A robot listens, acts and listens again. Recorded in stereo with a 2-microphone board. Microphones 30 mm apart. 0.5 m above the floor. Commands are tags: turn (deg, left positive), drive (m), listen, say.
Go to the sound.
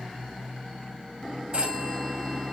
<turn deg="-50"/>
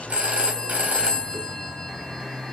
<turn deg="-75"/>
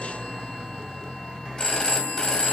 <turn deg="25"/>
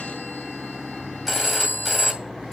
<drive m="1.0"/>
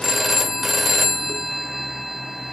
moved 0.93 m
<drive m="1.0"/>
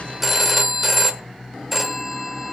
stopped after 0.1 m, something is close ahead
<turn deg="-10"/>
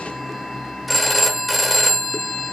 <say>Arrived at the phone ringing, straight ahead.</say>